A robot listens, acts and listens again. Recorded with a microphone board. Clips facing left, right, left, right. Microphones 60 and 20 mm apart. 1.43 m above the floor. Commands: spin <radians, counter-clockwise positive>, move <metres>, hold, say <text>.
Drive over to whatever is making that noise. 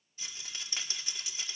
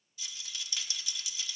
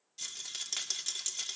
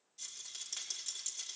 spin 0.61
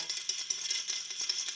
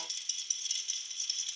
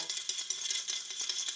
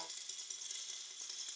spin 1.92
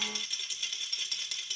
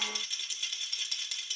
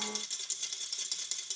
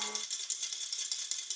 move 1.0
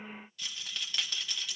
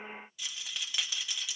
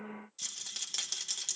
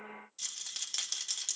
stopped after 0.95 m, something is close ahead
say I am next to the rattle.